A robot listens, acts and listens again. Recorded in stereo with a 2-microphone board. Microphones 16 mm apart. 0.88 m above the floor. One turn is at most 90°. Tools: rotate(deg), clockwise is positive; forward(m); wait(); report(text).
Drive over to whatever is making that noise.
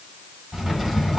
rotate(20)
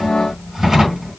rotate(90)
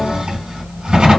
rotate(65)
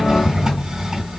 rotate(35)
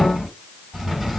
forward(1.0)
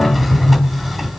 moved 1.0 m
forward(1.0)
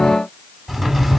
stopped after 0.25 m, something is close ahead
rotate(10)
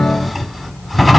report("Arrived at the drawer, straight ahead.")